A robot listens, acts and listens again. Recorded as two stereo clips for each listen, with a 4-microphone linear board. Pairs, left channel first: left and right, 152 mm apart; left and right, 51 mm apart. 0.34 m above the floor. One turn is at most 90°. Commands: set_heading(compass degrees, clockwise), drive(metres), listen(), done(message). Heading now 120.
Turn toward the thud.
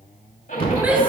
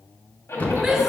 set_heading(80)
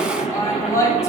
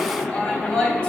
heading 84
listen()
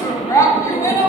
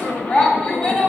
done("I heard a thud, but can't make it out now. It was about straight ahead or 105° left.")